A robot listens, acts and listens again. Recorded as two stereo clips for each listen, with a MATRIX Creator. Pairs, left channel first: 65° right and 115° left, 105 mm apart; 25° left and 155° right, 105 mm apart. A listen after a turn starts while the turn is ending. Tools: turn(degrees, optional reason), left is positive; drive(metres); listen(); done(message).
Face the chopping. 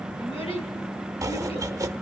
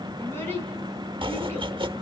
turn(degrees=170, reason="The chopping: 170° left.")
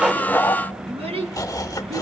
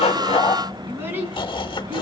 turn(degrees=-15, reason="The chopping is now 15° right.")
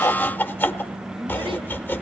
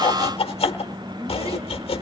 done("Facing the chopping, 1 to 2 m away.")